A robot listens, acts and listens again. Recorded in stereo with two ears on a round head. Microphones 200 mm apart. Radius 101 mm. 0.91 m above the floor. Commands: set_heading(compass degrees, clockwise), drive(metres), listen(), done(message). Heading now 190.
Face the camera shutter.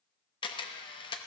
set_heading(165)
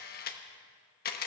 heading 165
set_heading(35)
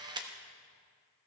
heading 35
set_heading(55)
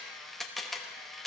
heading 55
done("Found it: a camera shutter, straight ahead.")